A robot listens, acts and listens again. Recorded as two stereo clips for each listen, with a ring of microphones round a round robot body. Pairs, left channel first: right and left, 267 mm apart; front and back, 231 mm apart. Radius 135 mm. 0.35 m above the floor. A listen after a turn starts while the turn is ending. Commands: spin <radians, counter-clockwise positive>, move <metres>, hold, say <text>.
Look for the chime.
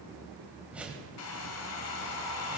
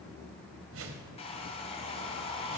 hold
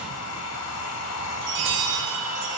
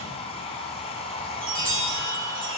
spin 2.18
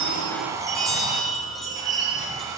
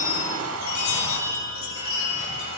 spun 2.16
say Facing the chime, over 4 m away.